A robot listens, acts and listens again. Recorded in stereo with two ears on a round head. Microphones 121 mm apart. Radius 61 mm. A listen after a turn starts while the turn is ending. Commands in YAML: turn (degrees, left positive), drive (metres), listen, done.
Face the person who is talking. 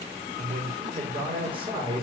turn: -40
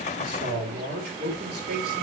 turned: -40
turn: -105
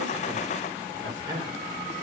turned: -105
turn: -30
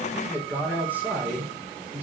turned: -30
turn: -15
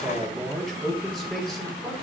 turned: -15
done: "Found it: a man speaking, straight ahead."